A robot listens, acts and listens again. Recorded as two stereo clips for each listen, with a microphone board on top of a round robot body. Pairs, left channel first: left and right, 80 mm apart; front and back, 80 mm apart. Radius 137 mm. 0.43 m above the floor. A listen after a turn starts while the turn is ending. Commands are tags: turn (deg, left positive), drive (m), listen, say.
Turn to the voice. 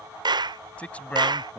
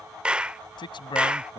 <turn deg="15"/>
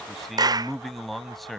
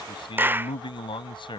<say>Found it: a man speaking, straight ahead.</say>